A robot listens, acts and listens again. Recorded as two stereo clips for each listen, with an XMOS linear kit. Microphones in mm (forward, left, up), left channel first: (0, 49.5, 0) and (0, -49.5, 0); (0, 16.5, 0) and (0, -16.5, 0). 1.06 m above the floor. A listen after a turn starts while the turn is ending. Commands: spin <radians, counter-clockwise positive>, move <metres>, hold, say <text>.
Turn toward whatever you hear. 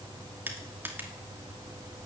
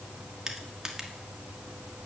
spin -0.35
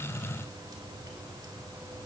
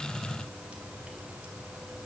hold
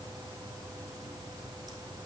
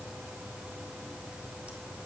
hold
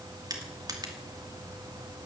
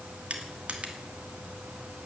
spin -2.36
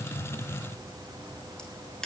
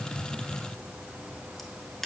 spin 0.17
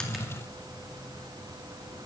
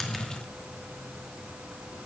hold
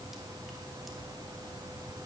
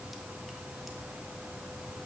hold
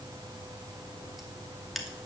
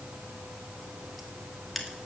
say Facing the crushing.